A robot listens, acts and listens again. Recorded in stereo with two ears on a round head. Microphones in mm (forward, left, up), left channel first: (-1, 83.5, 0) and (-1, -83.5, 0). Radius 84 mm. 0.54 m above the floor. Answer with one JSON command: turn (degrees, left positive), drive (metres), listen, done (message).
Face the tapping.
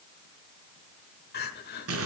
{"listen": true}
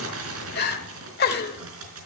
{"listen": true}
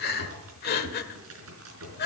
{"done": "I can't make out tapping, only crumpling and crying."}